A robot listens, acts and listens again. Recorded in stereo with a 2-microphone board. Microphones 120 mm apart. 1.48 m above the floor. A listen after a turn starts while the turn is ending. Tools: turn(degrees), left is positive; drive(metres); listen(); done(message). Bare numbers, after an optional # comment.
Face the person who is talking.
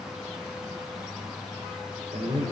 turn(-90)
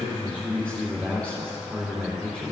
# So it is at 10° left.
turn(10)
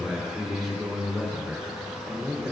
done("Facing the man speaking, 2 to 4 m away.")